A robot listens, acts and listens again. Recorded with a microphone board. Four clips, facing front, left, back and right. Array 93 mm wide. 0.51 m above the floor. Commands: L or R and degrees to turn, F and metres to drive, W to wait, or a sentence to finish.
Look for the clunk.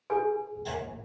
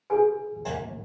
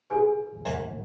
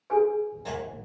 L160
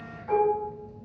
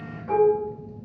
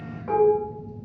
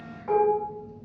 Facing where the clunk came from. I can't hear it now.